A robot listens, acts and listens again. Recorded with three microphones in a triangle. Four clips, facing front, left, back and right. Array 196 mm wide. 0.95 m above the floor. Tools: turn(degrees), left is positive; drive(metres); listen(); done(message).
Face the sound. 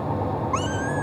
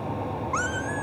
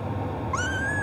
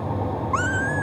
turn(degrees=-80)
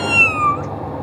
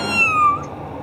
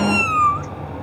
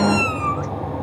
turn(degrees=-15)
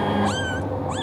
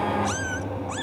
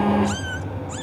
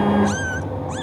done("Found it: a cat meowing, straight ahead.")